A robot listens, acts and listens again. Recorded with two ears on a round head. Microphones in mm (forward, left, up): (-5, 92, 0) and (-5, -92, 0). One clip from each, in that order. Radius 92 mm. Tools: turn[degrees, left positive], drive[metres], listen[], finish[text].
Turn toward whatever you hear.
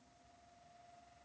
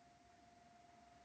Action: listen[]
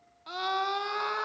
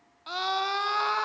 Thought: The scream: about 30° right or 150° right.
Action: turn[-30]
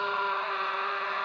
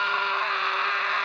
Thought: So it is at 120° right.
Action: turn[-120]
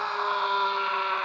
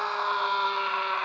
Thought: The scream is now 10° right.
Action: turn[-10]
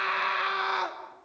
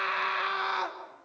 Action: finish[Found it: a scream, straight ahead.]